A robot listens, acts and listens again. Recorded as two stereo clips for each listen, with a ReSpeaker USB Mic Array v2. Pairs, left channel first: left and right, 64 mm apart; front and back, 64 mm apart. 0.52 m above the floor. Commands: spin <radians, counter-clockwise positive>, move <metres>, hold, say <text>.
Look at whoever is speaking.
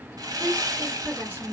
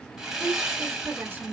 spin -2.36
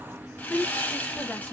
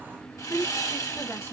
spin 0.61
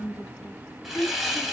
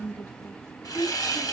spin 0.70
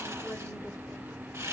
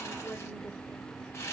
hold
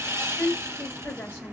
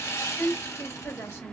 spin 0.44
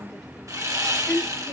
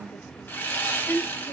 spin 0.17
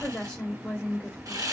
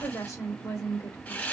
say Facing the woman speaking, 1 to 2 m away.